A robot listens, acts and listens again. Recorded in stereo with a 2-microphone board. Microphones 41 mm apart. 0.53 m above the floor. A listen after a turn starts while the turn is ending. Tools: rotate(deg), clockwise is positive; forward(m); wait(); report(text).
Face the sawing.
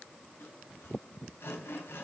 rotate(-90)
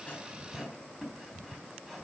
report("Found it: sawing, straight ahead.")